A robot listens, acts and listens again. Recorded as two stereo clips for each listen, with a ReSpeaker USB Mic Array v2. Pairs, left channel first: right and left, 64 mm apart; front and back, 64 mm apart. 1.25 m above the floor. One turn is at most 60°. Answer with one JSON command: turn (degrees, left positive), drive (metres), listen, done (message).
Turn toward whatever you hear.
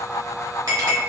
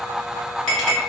{"turn": 60}
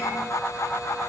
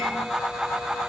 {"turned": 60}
{"turn": 25}
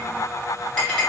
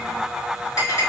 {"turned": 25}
{"turn": -10}
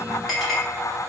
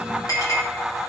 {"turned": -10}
{"done": "Facing the clink."}